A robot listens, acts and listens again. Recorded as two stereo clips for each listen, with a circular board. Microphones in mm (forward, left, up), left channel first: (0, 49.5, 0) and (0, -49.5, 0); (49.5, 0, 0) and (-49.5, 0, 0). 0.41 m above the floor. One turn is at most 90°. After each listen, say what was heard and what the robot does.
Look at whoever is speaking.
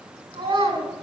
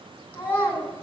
The child speaking: 65° right. Turn 65° right.
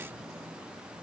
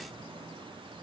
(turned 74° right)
Keep listening.
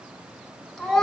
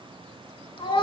Found it: a child speaking, straight ahead, 2 to 4 m away.